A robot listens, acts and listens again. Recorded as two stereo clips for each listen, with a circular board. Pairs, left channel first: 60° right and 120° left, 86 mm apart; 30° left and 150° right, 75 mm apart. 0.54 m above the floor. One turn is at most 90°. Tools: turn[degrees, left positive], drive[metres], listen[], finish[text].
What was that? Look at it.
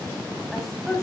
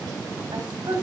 Thought: The woman speaking: 145° right.
Action: turn[-90]
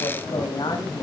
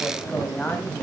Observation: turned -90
Thought: The woman speaking is now 40° right.
Action: turn[-40]
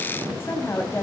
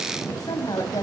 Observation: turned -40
Action: finish[Found it: a woman speaking, straight ahead.]